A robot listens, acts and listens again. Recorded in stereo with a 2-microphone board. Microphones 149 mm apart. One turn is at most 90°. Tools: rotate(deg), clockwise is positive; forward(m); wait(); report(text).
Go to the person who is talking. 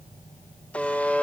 wait()
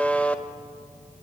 wait()
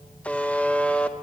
report("I can't make out anyone speaking, only a buzzer.")